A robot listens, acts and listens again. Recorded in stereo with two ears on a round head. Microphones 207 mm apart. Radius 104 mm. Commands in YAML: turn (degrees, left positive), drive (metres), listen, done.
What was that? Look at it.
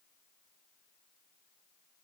listen: true
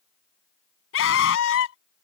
turn: 60
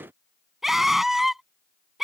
done: "Facing the scream."